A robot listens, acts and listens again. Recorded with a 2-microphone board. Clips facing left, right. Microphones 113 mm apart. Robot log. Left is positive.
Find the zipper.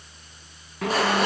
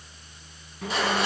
cmd yaw +90
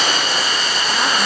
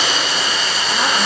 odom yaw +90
cmd idle
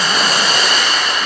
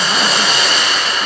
cmd idle
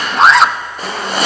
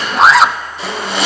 end: Facing the zipper, 1 to 2 m away.